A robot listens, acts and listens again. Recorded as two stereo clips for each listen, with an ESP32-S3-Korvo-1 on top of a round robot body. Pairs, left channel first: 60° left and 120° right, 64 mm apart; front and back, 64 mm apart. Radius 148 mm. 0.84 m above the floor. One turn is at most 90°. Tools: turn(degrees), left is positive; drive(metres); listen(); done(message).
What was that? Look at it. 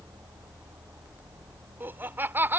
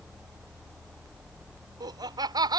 turn(degrees=90)
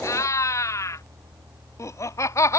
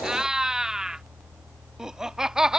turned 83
turn(degrees=90)
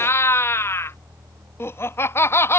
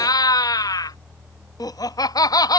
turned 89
turn(degrees=10)
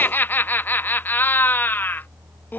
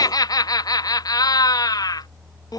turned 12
done("Found it: laughter, straight ahead.")